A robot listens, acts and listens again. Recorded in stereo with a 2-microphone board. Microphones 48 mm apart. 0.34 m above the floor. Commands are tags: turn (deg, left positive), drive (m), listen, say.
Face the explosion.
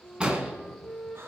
<turn deg="-20"/>
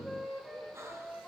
<listen/>
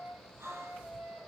<say>I heard an explosion, but can't make it out now. It was about straight ahead or 140° right.</say>